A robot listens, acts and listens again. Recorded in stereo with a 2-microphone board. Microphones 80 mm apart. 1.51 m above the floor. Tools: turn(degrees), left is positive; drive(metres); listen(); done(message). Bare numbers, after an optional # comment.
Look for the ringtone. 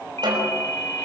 # The ringtone: about 40° left or 140° left.
turn(40)
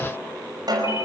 listen()
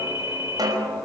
# So it is at 100° left.
turn(100)
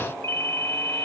# The ringtone is now 35° left.
turn(35)
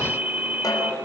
# The ringtone is now 15° right.
turn(-15)
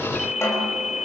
done("Facing the ringtone.")